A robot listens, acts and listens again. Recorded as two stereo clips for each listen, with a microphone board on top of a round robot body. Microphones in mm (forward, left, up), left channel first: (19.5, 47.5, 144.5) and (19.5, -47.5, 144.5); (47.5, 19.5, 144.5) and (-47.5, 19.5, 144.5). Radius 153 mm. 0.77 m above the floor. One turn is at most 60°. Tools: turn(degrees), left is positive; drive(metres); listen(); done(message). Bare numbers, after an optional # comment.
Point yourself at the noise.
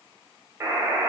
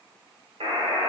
# The buzzer: 155° right.
turn(-60)
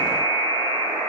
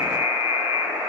# The buzzer is now 100° right.
turn(-60)
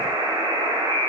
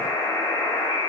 # The buzzer is now 45° right.
turn(-45)
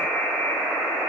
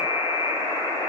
done("Facing the buzzer, 2 to 4 m away.")